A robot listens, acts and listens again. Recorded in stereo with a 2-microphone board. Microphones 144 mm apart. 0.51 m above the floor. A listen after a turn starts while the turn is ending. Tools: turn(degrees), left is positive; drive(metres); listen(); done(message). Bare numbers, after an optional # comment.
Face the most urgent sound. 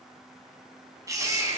# The baby crying: about 25° right or 155° right.
turn(-25)
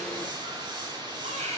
# So it is at 130° right.
turn(-130)
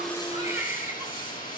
# The baby crying is now 20° right.
turn(-20)
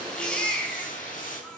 done("Facing the baby crying, 2 to 4 m away.")